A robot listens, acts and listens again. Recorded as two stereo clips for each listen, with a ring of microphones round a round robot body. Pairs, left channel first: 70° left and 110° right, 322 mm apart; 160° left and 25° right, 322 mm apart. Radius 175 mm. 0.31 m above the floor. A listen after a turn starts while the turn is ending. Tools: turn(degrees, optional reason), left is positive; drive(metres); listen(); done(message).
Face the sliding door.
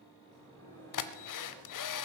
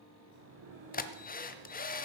turn(degrees=-10, reason="The sliding door: 10° right.")
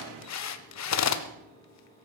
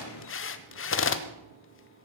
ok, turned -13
listen()
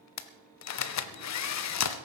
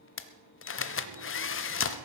listen()
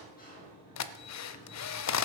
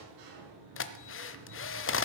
done("Facing the sliding door, over 4 m away.")